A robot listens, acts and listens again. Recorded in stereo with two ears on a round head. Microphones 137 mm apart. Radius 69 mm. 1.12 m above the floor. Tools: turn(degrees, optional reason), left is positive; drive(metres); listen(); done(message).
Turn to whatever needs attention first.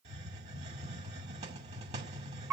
listen()
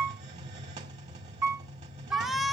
turn(degrees=30)
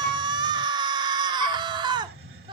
turn(degrees=-35, reason="So it is at 35° right.")
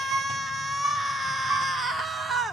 done("Found it: a shout, straight ahead.")